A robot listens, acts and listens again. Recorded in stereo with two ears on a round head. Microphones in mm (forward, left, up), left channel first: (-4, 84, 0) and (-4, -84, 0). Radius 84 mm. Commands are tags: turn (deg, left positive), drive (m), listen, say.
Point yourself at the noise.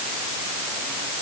<listen/>
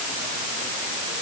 <listen/>
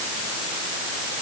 <say>I can't make out anything to turn to.</say>